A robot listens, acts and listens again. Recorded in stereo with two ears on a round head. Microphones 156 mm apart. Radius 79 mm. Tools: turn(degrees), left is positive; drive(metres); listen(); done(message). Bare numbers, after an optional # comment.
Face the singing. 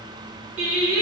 # The singing: about 35° right or 145° right.
turn(-35)
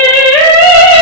# So it is at 25° left.
turn(25)
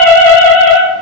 # The singing is now 25° left.
turn(25)
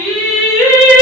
# The singing is now 25° left.
turn(25)
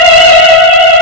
# The singing is now 10° left.
turn(10)
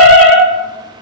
done("Found it: singing, straight ahead.")